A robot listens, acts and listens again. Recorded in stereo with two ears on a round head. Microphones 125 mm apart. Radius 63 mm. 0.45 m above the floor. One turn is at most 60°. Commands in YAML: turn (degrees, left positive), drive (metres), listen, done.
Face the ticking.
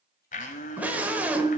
listen: true
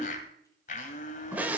listen: true
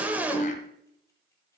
done: "I can't make out ticking to turn to."